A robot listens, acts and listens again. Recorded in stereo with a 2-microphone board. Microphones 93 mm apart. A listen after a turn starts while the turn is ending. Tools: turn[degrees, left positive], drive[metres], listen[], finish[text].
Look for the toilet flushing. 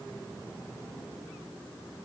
Action: listen[]
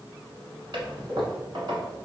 Thought: The toilet flushing: about 60° right or 120° right.
Action: turn[-60]
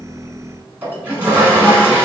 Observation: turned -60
Thought: So it is at 25° right.
Action: turn[-25]
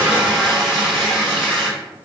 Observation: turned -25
Action: finish[Facing the toilet flushing.]